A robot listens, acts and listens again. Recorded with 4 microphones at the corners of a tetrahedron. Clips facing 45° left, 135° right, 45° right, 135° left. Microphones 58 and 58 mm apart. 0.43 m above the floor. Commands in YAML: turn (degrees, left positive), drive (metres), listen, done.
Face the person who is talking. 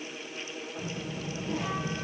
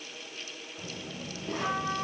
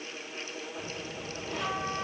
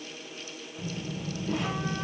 turn: -100
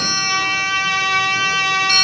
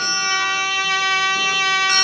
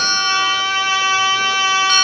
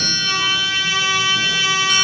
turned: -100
listen: true
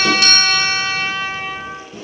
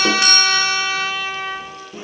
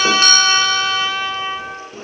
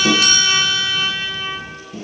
turn: -40
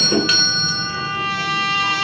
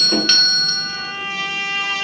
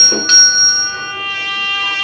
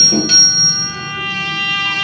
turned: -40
listen: true
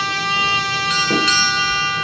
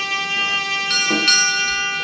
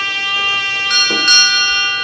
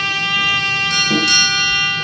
done: "Facing the child speaking, 2 to 4 m away."